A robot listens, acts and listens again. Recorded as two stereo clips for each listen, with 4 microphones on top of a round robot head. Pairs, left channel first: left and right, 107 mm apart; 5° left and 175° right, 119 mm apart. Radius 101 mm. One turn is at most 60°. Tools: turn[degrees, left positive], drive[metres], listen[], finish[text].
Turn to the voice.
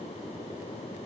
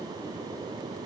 Action: listen[]
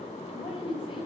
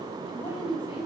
Thought: The woman speaking: 55° left.
Action: turn[55]
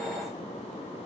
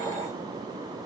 Action: listen[]
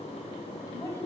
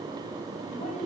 Thought: The woman speaking is now 30° left.
Action: turn[30]
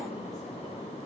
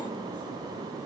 Action: listen[]
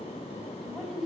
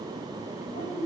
Action: finish[Facing the woman speaking.]